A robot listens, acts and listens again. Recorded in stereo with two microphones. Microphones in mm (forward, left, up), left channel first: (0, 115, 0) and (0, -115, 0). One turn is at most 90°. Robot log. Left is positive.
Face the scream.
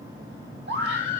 note: The scream: about 50° right or 130° right.
cmd yaw -50
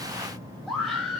end: Facing the scream, 2 to 4 m away.